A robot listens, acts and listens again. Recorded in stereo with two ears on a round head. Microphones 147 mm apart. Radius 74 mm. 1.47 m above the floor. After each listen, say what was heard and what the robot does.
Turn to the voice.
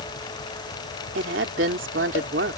Turn 90° right.
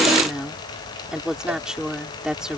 Found it: a woman speaking, straight ahead.